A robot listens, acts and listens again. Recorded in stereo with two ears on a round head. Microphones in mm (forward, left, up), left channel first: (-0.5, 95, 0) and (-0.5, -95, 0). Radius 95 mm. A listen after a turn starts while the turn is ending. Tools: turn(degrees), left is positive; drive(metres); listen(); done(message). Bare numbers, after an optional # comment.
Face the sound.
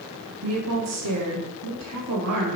# The woman speaking: about 75° right or 105° right.
turn(-75)
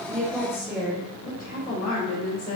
# So it is at 25° left.
turn(25)
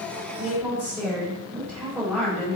done("Found it: a woman speaking, straight ahead.")